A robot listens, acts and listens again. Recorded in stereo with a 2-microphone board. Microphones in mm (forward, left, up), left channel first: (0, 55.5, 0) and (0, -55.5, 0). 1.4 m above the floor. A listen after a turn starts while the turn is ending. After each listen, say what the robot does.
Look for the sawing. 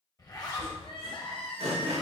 Turn 70° right.
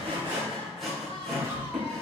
Found it: sawing, straight ahead.